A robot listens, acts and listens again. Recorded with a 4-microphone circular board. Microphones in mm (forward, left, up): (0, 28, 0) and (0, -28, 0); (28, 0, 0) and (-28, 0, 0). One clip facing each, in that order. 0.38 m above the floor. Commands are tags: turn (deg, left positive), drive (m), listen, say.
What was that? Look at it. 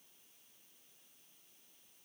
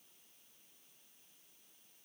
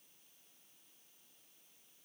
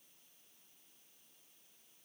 <listen/>
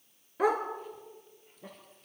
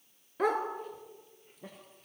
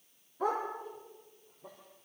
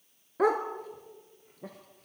<turn deg="175"/>
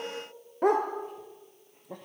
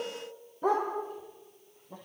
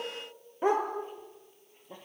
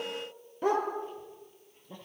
<turn deg="70"/>
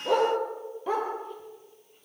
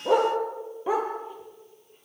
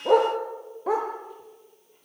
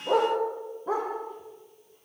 <turn deg="-10"/>
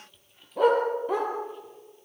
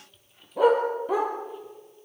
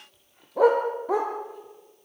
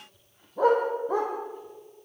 <say>Facing the dog barking.</say>